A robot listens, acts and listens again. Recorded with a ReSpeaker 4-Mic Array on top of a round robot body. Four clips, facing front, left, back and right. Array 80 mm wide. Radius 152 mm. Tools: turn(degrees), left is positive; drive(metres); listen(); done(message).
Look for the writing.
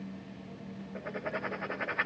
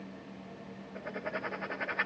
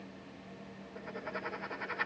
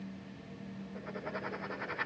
turn(degrees=20)
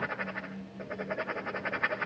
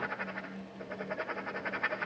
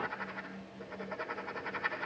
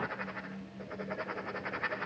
done("Facing the writing, over 4 m away.")